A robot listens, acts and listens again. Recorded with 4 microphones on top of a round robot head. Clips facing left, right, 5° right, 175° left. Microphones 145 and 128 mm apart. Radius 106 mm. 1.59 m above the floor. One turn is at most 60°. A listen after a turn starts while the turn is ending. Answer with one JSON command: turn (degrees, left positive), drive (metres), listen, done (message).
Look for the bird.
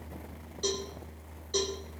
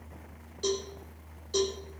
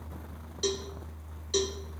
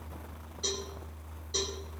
{"listen": true}
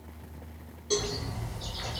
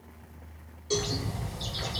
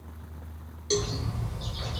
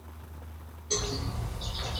{"turn": -60}
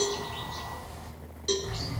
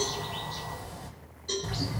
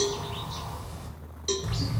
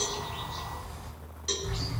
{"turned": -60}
{"turn": -25}
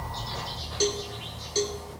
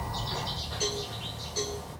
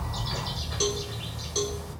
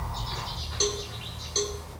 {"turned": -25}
{"done": "Facing the bird, 2 to 4 m away."}